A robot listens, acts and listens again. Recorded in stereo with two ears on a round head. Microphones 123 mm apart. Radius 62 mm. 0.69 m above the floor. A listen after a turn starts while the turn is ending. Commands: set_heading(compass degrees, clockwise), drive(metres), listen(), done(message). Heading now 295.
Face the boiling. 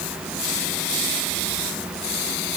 listen()
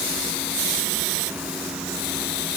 listen()
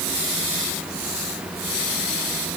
done("I can't make out boiling.")